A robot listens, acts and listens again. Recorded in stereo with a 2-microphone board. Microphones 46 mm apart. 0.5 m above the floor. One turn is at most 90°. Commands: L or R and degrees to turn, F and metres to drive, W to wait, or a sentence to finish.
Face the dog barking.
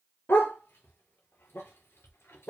L70
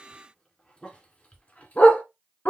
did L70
L45
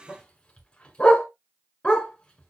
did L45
L25
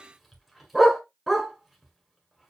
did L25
Found it: a dog barking, straight ahead, 1 to 2 m away.